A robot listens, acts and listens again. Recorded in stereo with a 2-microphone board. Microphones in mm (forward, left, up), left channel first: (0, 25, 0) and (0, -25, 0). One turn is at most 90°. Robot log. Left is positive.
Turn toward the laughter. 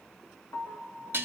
cmd idle
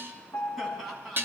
cmd yaw -30
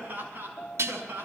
note: So it is at 140° right.
cmd yaw -90
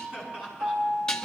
note: The laughter is now 10° right.
cmd yaw -10
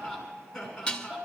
end: Found it: laughter, straight ahead, over 4 m away.